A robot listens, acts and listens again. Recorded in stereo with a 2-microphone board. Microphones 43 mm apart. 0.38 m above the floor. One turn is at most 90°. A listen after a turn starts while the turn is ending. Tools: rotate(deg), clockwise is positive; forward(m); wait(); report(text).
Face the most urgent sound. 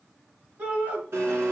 rotate(40)
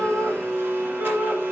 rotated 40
rotate(90)
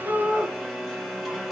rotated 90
rotate(10)
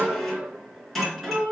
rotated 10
rotate(35)
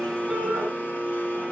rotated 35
report("Facing the shout.")